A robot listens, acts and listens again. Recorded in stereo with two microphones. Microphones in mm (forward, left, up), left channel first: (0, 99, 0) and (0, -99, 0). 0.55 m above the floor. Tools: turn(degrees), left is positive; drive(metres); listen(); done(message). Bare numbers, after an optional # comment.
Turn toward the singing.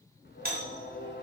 # The singing: about 60° left or 120° left.
turn(60)
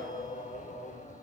# So it is at 45° left.
turn(45)
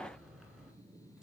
done("Facing the singing, under 1 m away.")